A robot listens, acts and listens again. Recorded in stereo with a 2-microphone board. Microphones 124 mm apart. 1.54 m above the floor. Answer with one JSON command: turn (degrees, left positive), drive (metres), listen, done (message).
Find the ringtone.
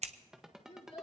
{"turn": -30}
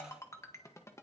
{"turn": 25}
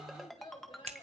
{"done": "Found it: a ringtone, straight ahead, 1 to 2 m away."}